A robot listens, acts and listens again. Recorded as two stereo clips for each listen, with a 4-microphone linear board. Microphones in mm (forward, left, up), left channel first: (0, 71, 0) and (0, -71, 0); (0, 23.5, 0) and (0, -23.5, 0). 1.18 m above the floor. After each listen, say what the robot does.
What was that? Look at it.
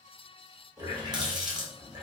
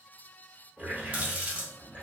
Turn 30° right.
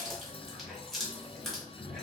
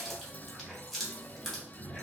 Facing the running tap.